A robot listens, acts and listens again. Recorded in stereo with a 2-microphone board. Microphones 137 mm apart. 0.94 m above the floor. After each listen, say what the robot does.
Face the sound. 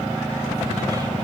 Keep listening.
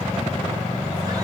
Keep listening.
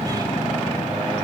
I can't make out anything.